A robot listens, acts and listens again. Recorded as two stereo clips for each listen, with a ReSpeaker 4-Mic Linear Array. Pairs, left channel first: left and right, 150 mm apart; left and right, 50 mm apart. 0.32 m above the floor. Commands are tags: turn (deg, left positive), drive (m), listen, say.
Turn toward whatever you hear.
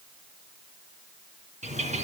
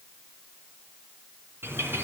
<turn deg="-50"/>
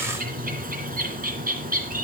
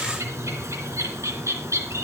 <turn deg="-75"/>
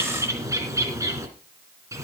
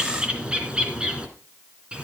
<turn deg="-20"/>
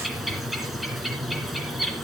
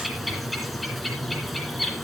<say>Facing the bird, 2 to 4 m away.</say>